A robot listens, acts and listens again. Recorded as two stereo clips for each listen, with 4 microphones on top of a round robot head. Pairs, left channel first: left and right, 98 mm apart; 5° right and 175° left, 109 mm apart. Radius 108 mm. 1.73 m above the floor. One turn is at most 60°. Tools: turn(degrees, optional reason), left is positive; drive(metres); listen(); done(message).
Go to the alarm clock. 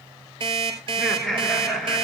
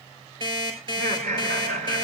turn(degrees=-60, reason="The alarm clock: 130° right.")
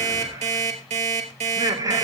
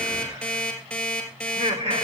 turn(degrees=-60, reason="The alarm clock is now 90° right.")
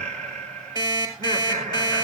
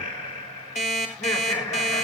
turn(degrees=-30, reason="The alarm clock is now 30° right.")
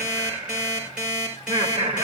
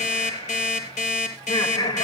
drive(metres=1.0)
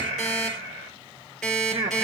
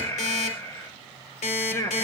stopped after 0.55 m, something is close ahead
done("Blocked. The alarm clock is further on, straight ahead.")